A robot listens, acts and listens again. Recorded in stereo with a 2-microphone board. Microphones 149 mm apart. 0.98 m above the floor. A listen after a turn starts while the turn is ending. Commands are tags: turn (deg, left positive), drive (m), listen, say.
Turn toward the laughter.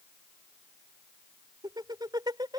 <turn deg="-25"/>
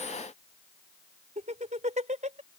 <turn deg="-125"/>
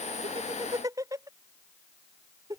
<turn deg="-25"/>
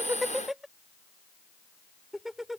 <say>Found it: laughter, straight ahead.</say>